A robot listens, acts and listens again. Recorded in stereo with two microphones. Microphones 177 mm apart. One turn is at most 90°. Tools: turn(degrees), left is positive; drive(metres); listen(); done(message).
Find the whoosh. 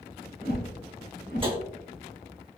turn(degrees=-60)
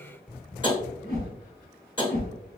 turn(degrees=-60)
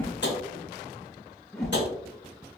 done("Facing the whoosh, 1 to 2 m away.")